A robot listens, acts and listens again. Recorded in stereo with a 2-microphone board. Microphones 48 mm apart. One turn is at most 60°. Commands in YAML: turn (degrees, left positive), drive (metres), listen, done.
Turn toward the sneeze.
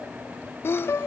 turn: 55
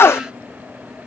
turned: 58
turn: 60
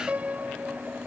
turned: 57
done: "I heard a sneeze from this way, but can't make it out now."